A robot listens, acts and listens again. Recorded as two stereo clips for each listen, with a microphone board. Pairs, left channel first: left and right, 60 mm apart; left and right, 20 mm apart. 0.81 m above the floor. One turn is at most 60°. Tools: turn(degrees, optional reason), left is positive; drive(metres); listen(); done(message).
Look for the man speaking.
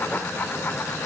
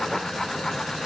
listen()
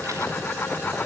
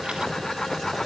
listen()
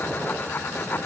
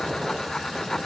done("I can't make out a man speaking.")